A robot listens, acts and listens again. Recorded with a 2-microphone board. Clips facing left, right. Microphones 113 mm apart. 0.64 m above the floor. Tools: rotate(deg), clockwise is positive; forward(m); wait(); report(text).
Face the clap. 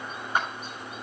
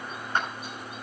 rotate(-30)
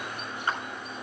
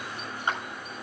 rotate(20)
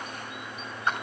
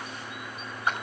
rotate(10)
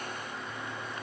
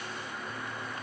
wait()
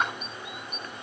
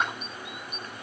report("Found it: a clap, straight ahead, over 4 m away.")